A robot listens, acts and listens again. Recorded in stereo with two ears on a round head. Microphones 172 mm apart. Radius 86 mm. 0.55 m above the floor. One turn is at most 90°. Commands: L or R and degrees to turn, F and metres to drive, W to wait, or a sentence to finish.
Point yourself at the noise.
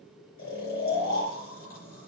L50
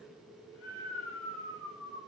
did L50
L80
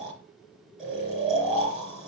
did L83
Facing the snoring, over 4 m away.